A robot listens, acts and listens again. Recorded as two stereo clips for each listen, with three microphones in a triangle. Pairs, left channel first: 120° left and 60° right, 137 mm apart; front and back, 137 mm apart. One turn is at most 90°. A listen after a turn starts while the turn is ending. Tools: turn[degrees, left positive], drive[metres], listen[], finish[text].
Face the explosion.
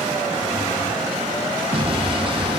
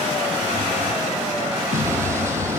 Thought: The explosion: 110° right.
Action: turn[-90]
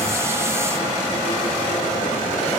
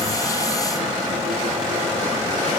Thought: Nothing new. It was at 20° right.
Action: turn[-20]
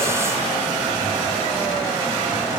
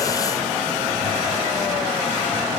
Action: finish[I heard an explosion from this way, but can't make it out now.]